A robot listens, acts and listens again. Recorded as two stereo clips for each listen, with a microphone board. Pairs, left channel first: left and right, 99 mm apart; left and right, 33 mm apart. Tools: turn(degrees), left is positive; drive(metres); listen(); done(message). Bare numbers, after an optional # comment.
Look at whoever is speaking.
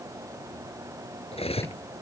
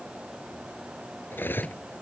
listen()
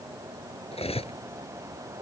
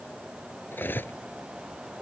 listen()
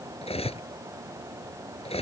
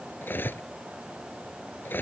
done("I can't make out anyone speaking, only cutlery clinking.")